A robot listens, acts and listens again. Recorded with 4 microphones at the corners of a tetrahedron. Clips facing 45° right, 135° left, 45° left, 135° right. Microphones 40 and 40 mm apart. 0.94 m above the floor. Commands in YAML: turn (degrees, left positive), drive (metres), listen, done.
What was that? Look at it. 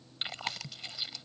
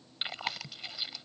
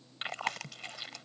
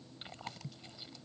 turn: 55
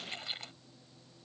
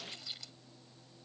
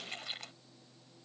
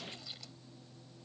done: "Facing the chewing."